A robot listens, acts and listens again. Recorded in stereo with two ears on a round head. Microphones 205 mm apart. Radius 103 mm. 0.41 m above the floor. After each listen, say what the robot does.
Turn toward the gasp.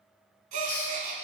Turn 35° right.
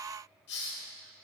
Keep listening.
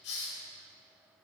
I heard a gasp, but can't make it out now. It was about straight ahead or 110° right.